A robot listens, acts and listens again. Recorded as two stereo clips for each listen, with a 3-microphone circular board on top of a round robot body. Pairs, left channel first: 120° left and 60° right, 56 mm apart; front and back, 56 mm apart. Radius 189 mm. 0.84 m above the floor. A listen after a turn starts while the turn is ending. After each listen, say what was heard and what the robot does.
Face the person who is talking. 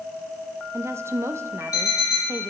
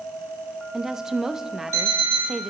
The woman speaking: 100° right. Turn 100° right.
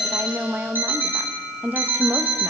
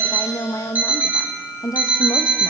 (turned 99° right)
Found it: a woman speaking, straight ahead.